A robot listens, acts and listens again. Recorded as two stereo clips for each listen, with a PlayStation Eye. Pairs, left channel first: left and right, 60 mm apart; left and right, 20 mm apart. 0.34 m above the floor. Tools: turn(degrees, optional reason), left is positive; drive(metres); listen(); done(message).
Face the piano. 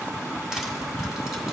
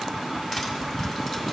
listen()
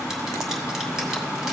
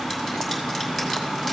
listen()
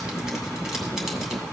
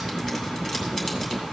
done("I can't make out a piano.")